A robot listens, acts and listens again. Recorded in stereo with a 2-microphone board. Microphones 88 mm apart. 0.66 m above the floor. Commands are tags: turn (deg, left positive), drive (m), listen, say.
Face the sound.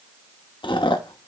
<turn deg="70"/>
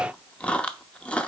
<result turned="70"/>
<turn deg="15"/>
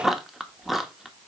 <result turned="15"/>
<say>Found it: chewing, straight ahead.</say>